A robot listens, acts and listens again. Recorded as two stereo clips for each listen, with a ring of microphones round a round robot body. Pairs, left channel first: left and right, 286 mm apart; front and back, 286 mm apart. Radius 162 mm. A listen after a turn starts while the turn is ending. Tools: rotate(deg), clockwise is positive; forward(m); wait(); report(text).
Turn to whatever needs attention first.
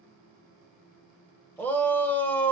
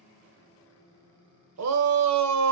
rotate(-175)
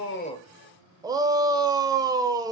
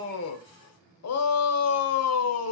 rotate(15)
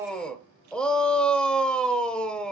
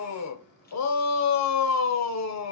report("Found it: a shout, straight ahead.")